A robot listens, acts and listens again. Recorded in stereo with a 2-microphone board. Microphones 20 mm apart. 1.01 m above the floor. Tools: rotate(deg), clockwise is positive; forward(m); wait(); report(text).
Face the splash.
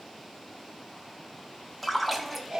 rotate(30)
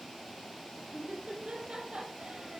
wait()
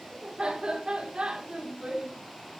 report("I heard a splash, but can't make it out now. It was about 25° left or 145° right.")